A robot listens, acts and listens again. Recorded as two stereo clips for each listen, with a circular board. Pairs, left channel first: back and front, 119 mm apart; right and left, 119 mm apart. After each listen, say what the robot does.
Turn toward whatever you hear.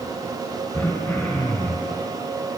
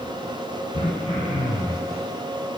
Turn 105° right.
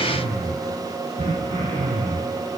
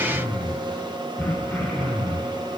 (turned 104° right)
Found it: throat clearing, straight ahead.